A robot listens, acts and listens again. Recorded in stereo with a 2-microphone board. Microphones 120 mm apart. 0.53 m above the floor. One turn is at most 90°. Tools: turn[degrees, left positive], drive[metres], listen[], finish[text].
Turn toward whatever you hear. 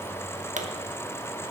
Thought: The pop: about 70° right or 110° right.
Action: turn[-70]
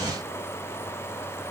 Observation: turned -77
Action: listen[]
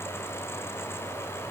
Action: finish[I heard a pop, but can't make it out now. It was about 5° left or 30° right.]